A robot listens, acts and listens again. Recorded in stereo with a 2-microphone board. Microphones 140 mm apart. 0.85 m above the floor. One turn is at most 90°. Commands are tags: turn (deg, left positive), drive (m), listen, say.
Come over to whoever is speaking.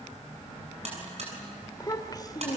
<turn deg="30"/>
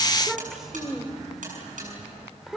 <drive m="1.0"/>
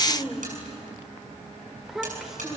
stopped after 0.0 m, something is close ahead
<say>Blocked. The child speaking is further on, straight ahead.</say>